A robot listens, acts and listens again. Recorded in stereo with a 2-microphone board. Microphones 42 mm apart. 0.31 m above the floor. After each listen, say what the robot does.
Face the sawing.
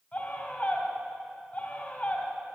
Keep listening.
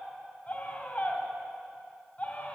Keep listening.
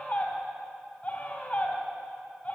I can't make out sawing to turn to.